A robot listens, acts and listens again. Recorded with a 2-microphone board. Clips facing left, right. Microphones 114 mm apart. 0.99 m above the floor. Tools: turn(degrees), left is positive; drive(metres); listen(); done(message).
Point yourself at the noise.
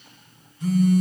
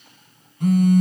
turn(degrees=-55)
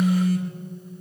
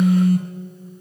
turn(degrees=-55)
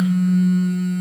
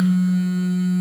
done("Found it: a phone buzzing, straight ahead, 1 to 2 m away.")